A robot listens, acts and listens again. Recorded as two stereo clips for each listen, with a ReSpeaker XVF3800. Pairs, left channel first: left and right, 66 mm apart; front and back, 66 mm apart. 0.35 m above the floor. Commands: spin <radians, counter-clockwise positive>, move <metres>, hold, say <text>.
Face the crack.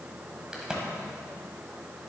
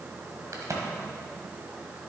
spin -2.88
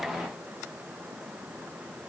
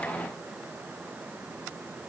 say I heard a crack from this way, but can't make it out now.